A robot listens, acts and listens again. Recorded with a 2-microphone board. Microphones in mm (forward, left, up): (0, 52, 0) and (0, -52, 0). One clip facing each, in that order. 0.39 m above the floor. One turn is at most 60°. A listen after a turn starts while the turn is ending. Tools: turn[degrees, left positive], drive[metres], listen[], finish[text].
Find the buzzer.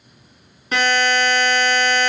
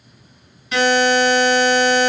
Thought: The buzzer: about 50° left or 130° left.
Action: turn[50]
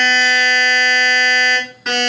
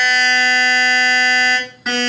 Action: finish[Found it: a buzzer, straight ahead.]